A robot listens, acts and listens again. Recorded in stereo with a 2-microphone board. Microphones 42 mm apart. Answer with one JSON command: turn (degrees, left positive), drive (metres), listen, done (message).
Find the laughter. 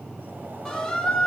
{"listen": true}
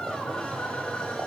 {"listen": true}
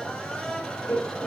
{"turn": 65}
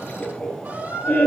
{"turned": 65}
{"turn": 45}
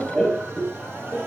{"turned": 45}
{"turn": -10}
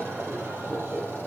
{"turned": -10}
{"done": "Found it: laughter, straight ahead, over 4 m away."}